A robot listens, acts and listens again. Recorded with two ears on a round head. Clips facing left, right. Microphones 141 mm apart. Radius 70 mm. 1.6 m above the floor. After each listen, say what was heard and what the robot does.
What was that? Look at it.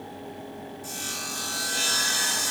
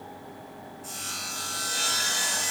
Turn 30° left.
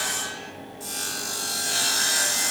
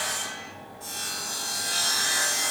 So it is at 140° left. Turn 140° left.
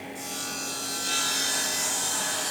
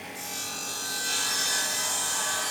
The sawing is now 10° right. Turn 10° right.
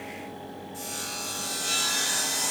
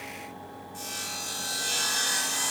Facing the sawing, 2 to 4 m away.